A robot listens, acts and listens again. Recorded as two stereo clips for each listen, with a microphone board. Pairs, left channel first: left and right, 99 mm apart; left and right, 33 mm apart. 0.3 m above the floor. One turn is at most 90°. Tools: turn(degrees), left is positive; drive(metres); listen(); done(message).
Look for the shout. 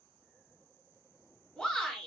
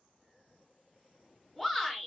turn(degrees=30)
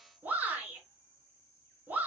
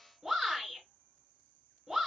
turn(degrees=-20)
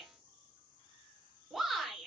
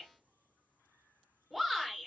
done("Facing the shout.")